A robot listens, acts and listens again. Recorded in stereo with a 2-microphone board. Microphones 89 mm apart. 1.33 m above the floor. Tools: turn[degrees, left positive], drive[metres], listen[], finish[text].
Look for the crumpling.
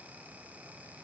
Action: listen[]
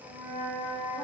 Action: listen[]
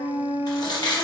Thought: The crumpling: about 45° left or 135° left.
Action: turn[45]
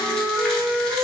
Action: listen[]
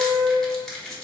Action: finish[Facing the crumpling.]